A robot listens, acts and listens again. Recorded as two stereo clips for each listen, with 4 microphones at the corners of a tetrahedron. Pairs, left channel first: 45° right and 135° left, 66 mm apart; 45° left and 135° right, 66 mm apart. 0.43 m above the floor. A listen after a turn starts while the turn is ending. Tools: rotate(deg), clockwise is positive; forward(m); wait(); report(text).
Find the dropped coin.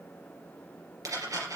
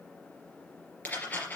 rotate(-105)
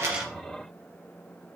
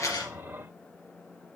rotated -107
report("I heard a dropped coin from this way, but can't make it out now.")